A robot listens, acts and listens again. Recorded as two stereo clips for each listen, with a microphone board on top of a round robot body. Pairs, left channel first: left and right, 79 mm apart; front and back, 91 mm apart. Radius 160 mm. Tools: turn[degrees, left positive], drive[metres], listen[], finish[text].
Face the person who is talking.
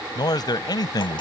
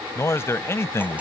Thought: The man speaking: 60° left.
Action: turn[60]
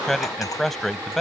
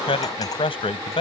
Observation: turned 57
Action: finish[Facing the man speaking.]